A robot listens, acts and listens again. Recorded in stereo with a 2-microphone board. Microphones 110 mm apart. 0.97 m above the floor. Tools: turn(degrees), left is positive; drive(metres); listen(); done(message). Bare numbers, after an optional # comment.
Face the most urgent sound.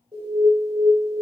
# The alarm: about 45° right or 135° right.
turn(-45)
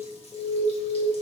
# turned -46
done("Facing the alarm.")